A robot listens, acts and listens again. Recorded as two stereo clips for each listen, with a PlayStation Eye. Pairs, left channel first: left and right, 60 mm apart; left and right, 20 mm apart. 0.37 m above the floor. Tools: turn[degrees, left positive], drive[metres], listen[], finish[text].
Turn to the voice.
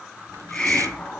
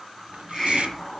Action: listen[]
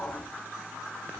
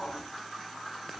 Action: listen[]
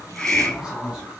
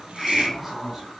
Thought: The man speaking: about 15° right or 165° right.
Action: turn[-15]
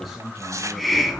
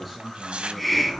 Action: turn[-30]
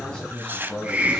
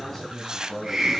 Thought: So it is at 10° left.
Action: turn[10]
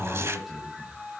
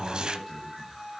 Action: finish[Found it: a man speaking, straight ahead, 1 to 2 m away.]